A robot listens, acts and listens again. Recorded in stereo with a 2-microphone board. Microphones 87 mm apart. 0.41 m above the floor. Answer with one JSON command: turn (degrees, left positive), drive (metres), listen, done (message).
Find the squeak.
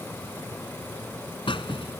{"turn": 90}
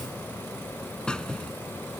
{"turn": 10}
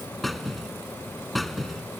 {"done": "Found it: a squeak, straight ahead."}